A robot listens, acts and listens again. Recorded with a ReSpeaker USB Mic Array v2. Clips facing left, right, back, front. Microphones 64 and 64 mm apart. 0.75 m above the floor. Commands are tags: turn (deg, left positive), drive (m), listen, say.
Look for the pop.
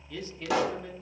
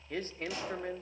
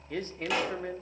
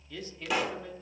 <turn deg="90"/>
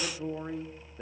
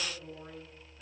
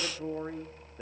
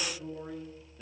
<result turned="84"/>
<say>Facing where the pop came from. I can't hear it now.</say>